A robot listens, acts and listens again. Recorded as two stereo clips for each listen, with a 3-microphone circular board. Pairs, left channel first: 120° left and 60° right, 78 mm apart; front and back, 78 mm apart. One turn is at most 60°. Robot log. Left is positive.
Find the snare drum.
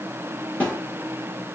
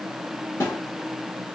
note: The snare drum: 50° left.
cmd yaw +50
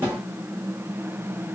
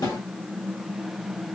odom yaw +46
end: Found it: a snare drum, straight ahead, 1 to 2 m away.